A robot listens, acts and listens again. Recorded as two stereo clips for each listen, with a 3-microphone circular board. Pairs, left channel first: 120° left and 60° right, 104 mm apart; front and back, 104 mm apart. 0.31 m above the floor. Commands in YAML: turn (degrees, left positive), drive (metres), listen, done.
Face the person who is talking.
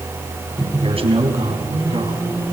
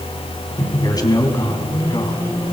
turn: -45
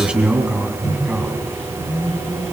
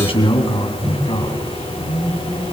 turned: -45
turn: 20
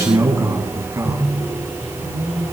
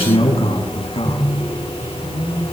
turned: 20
done: "Found it: a man speaking, straight ahead, 2 to 4 m away."